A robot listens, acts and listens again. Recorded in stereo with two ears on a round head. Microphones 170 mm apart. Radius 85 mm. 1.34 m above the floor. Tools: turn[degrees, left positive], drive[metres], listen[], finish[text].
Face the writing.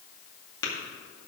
Action: listen[]
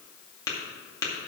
Action: listen[]
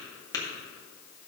Action: finish[I can't make out writing, only tapping.]